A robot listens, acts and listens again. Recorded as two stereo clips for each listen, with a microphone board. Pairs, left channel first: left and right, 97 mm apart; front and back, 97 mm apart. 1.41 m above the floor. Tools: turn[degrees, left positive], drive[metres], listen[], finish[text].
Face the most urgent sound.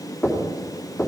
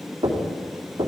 Action: listen[]
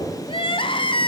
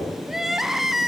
Thought: The crying: 95° left.
Action: turn[95]
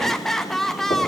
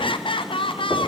Action: finish[Facing the crying.]